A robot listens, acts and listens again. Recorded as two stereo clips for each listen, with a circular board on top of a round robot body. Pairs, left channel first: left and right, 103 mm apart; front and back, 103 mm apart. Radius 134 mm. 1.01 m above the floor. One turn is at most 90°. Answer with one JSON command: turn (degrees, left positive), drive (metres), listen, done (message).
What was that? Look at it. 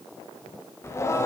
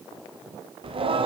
{"turn": 90}
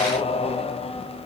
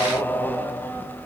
{"turn": 70}
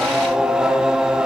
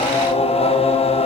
{"done": "Found it: singing, straight ahead."}